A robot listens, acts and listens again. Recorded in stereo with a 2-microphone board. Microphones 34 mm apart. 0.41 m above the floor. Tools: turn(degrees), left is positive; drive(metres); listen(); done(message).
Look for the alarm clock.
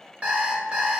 turn(degrees=-50)
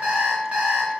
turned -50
turn(degrees=-65)
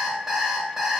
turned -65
done("Facing the alarm clock, under 1 m away.")